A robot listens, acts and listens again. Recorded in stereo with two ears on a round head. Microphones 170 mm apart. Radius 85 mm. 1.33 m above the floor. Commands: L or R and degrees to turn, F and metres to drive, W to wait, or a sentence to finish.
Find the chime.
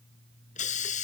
W
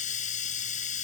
W
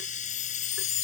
L90
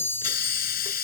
L10
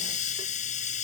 W
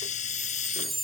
Found it: a chime, straight ahead.